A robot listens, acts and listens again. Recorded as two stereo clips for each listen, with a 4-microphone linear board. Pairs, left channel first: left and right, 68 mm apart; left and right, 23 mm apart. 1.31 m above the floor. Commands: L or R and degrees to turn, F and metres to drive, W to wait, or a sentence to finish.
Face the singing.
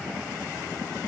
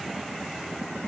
W
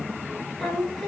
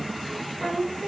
L30
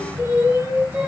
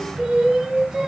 R30
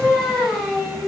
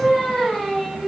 Found it: singing, straight ahead.